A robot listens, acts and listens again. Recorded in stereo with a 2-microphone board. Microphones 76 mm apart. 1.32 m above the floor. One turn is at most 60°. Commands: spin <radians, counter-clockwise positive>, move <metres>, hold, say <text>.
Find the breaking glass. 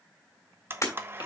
spin 0.70
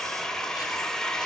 hold
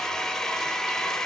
say I heard breaking glass, but can't make it out now. It was about straight ahead or 100° left.